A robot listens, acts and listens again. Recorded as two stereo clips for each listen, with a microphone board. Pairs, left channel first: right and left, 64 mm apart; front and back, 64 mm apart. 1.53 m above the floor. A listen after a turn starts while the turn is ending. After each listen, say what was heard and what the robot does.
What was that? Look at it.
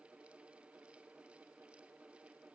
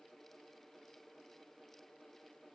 Keep listening.
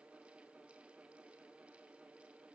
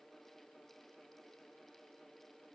Keep listening.
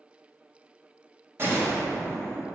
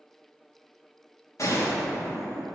The gunshot: 40° left. Turn 40° left.
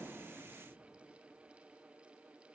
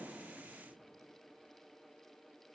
I heard a gunshot from this way, but can't make it out now.